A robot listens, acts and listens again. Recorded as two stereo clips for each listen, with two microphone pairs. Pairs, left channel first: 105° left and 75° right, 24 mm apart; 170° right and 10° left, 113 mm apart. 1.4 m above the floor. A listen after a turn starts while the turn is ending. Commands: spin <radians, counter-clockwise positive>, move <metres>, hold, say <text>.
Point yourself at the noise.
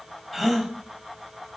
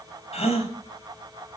spin -2.79
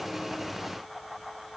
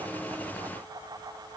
say Facing where the gasp came from. I can't hear it now.